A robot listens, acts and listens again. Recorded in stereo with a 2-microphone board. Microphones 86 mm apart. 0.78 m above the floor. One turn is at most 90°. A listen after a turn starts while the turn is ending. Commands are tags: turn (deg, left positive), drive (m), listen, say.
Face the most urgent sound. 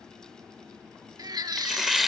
<turn deg="-55"/>
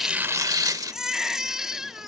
<say>Facing the baby crying.</say>